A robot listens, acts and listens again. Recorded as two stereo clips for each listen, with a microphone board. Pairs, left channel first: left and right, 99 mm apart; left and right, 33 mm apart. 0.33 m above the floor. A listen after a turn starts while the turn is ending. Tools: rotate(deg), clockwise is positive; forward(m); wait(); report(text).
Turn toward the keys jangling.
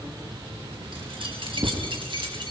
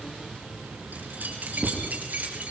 rotate(50)
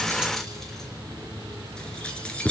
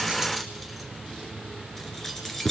rotate(-15)
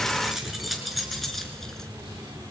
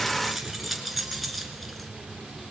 report("Found it: keys jangling, straight ahead.")